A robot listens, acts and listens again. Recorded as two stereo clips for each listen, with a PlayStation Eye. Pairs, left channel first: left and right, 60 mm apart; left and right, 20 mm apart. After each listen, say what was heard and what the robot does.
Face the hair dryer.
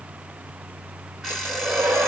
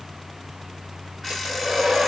The hair dryer: about 35° right or 145° right. Turn 35° right.
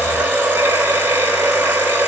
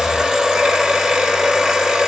Found it: a hair dryer, straight ahead.